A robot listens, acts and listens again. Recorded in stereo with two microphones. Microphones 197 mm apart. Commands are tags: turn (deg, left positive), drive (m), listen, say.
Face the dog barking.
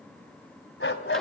<turn deg="90"/>
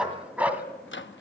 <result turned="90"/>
<turn deg="-10"/>
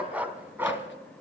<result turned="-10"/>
<turn deg="-10"/>
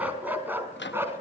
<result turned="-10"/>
<turn deg="-10"/>
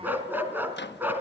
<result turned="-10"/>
<turn deg="-10"/>
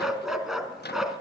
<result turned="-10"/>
<say>Found it: a dog barking, straight ahead, 2 to 4 m away.</say>